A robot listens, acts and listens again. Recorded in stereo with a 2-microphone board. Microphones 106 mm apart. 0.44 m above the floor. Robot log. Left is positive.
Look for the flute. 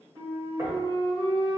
note: The flute: about 60° right or 120° right.
cmd yaw -60
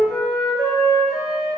end: Found it: a flute, straight ahead.